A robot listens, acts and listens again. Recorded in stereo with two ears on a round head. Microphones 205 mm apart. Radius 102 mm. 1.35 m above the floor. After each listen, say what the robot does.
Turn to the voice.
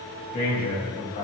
Turn 40° left.
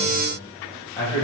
Turn 15° left.
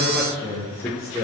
Turn 15° left.
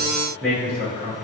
Turn 10° left.
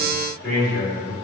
Turn 15° left.
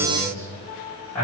Turn 10° left.
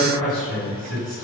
Found it: a man speaking, straight ahead.